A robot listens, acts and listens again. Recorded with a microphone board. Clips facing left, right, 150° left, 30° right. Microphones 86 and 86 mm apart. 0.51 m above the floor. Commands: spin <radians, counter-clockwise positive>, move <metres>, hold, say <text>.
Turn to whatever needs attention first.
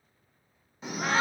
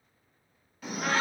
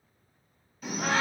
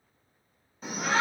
spin 0.44
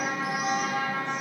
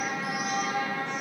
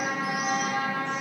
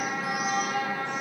say Found it: a shout, straight ahead.